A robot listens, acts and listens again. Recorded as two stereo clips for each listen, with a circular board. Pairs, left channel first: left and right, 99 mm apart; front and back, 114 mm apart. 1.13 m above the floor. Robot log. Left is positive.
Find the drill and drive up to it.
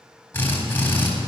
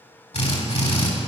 note: The drill: 25° left.
cmd yaw +25
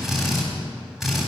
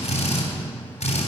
cmd fwd 1.0
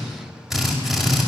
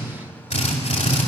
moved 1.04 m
cmd fwd 1.0
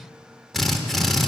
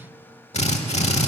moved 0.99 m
cmd fwd 1.0
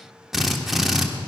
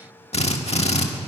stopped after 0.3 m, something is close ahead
end: Arrived at the drill, straight ahead.